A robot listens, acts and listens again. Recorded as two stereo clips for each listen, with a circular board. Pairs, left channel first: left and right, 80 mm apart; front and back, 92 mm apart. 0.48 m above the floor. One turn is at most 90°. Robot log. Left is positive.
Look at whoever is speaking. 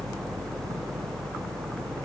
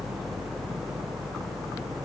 cmd idle
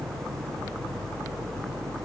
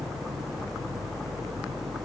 cmd idle
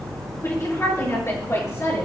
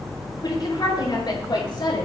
note: The woman speaking: 40° left.
cmd yaw +40
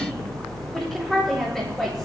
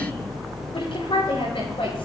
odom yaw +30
end: Found it: a woman speaking, straight ahead.